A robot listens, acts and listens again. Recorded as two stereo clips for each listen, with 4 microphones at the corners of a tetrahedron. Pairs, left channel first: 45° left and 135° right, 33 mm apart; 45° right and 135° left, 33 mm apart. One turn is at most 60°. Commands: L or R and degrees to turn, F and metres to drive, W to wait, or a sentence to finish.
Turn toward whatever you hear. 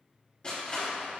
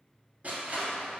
L60
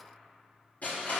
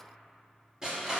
L60
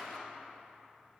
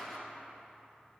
L30
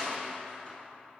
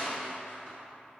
Facing the crushing.